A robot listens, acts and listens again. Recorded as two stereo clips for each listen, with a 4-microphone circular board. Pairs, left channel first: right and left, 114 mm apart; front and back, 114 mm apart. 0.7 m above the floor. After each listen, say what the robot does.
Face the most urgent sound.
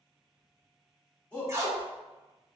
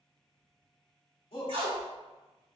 Turn 15° right.
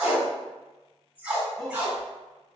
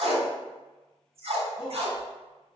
Found it: a shout, straight ahead, 1 to 2 m away.